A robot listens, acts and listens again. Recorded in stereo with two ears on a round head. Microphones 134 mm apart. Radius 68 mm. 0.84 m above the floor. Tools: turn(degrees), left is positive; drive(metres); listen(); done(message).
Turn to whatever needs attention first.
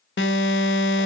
turn(degrees=90)
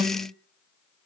turn(degrees=-10)
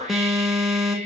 done("Facing the alarm, 2 to 4 m away.")